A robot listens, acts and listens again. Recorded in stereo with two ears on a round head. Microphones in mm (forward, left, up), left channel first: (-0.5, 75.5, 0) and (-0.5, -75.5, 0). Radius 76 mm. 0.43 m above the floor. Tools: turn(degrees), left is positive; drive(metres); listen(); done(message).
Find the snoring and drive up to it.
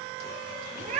listen()
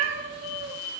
listen()
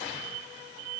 done("I can't make out snoring, only a cat meowing.")